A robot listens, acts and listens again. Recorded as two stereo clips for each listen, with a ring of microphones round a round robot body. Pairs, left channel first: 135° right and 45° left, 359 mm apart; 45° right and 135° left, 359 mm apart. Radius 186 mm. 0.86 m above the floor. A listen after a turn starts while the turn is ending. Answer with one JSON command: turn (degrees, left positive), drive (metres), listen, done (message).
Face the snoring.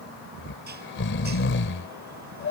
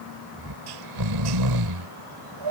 {"turn": 165}
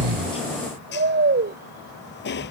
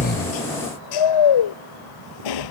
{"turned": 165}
{"turn": -20}
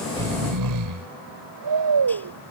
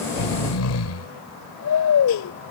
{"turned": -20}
{"done": "Found it: snoring, straight ahead."}